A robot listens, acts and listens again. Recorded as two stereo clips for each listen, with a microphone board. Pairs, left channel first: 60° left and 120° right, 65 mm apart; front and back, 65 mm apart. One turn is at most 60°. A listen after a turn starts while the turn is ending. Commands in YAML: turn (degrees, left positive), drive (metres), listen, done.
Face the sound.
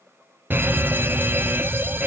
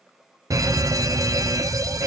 turn: -60
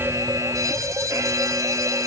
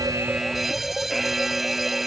turn: -60
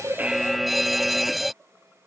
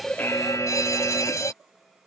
turn: -30
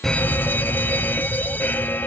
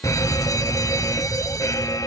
done: "Found it: a fire alarm, straight ahead."